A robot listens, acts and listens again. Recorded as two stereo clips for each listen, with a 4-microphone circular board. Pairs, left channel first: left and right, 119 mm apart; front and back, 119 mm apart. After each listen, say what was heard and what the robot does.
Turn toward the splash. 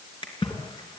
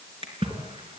The splash: 140° left. Turn 140° left.
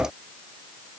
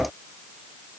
Facing where the splash came from. I can't hear it now.